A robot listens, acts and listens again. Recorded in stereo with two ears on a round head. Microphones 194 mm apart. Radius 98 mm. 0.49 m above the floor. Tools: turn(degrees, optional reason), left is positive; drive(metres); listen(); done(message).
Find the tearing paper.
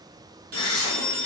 turn(degrees=20, reason="The tearing paper: about 20° left or 160° left.")
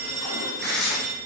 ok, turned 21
done("Facing the tearing paper, 1 to 2 m away.")